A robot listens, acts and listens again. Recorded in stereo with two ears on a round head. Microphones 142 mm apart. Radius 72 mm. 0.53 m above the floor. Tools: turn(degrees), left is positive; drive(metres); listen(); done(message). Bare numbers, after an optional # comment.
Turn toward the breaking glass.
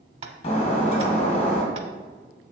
# The breaking glass: about 45° left or 135° left.
turn(45)
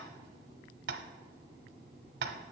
listen()
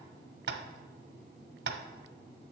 done("I heard breaking glass, but can't make it out now. It was about straight ahead or 90° left.")